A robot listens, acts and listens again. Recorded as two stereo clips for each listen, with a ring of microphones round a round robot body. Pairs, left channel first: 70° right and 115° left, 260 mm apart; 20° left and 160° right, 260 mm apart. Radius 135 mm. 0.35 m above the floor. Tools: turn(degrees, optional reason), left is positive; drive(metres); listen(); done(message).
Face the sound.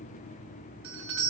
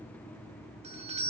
turn(degrees=140, reason="The doorbell: 140° left.")
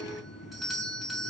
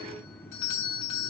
turn(degrees=25, reason="The doorbell is now 25° left.")
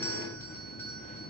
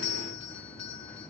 turn(degrees=15, reason="The doorbell is now 15° left.")
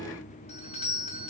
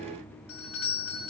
done("Found it: a doorbell, straight ahead, 2 to 4 m away.")